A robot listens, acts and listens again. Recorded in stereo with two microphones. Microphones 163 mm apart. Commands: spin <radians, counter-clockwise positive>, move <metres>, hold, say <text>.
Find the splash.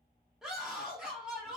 hold
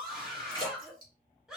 spin 0.44
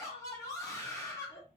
hold
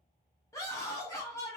say I heard a splash, but can't make it out now. It was about straight ahead or 130° left.